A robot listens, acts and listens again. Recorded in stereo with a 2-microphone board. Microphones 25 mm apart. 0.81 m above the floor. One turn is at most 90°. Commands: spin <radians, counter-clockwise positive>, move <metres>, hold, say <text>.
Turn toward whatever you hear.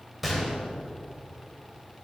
spin 0.52
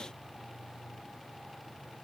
hold
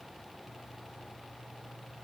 say I heard a gunshot, but can't make it out now. It was about 30° right or 150° left.